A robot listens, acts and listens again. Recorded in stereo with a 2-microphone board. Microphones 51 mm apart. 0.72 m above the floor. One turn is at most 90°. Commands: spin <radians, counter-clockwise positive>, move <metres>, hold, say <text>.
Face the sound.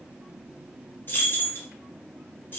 spin 0.79
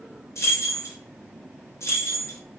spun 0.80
spin 1.48
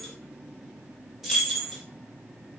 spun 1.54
say Facing the keys jangling, under 1 m away.